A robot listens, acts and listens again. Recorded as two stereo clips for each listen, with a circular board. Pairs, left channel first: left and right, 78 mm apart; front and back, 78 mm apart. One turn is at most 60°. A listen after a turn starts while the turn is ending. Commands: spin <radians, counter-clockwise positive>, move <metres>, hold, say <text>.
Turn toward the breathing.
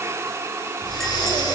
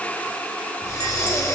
spin 0.87
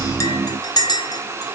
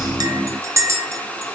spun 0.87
hold
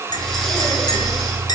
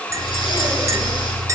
say Facing the breathing, 2 to 4 m away.